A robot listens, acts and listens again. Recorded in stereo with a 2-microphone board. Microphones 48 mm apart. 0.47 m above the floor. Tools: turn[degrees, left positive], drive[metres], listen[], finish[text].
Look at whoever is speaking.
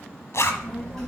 Action: turn[30]
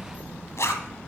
Thought: So it is at 140° left.
Action: turn[140]
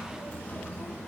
Thought: The child speaking is now 30° left.
Action: turn[30]
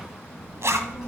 Thought: The child speaking is now 10° right.
Action: turn[-10]
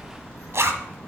Action: finish[Facing the child speaking, 2 to 4 m away.]